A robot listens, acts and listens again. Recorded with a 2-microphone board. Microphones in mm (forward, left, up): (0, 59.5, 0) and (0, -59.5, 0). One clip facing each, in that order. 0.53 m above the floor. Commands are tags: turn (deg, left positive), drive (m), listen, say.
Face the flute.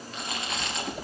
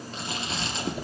<listen/>
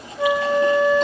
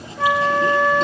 <turn deg="-75"/>
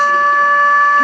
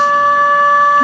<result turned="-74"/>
<turn deg="-10"/>
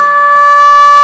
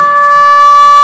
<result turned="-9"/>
<say>Facing the flute, under 1 m away.</say>